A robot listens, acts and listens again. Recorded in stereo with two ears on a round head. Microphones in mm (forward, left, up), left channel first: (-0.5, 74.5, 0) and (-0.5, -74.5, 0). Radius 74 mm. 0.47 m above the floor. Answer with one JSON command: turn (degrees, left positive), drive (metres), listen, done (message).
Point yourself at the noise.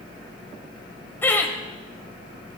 {"turn": 30}
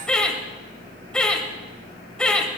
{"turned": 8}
{"turn": 30}
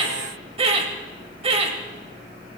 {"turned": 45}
{"turn": -40}
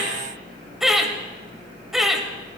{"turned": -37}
{"done": "Found it: laughter, straight ahead."}